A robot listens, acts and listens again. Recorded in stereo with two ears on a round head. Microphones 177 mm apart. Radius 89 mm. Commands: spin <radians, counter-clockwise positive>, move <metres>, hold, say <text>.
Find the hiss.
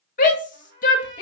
hold
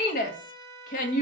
hold
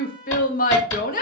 spin 1.57
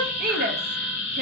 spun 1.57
say Found it: a hiss, straight ahead, over 4 m away.